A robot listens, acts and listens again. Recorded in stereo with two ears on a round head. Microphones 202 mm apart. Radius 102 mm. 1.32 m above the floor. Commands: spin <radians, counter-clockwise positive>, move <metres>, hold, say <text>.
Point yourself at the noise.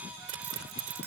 spin -1.13
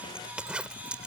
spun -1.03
say Facing the zipper.